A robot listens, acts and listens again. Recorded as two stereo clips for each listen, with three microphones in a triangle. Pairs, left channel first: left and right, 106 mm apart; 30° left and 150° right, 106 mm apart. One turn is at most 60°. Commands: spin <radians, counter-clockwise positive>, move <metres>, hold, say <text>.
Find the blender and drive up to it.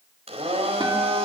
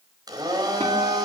spin -1.05
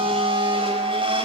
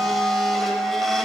spin -1.05
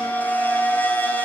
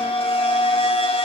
hold
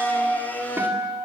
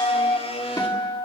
spin 0.26
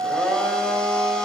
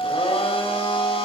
move 1.0
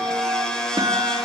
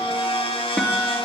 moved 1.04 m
move 1.0
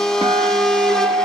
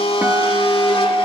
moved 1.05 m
move 1.0
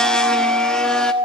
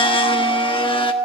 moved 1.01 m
move 1.0
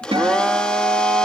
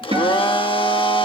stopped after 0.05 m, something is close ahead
spin 0.17
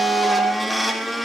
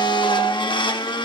say I am next to the blender.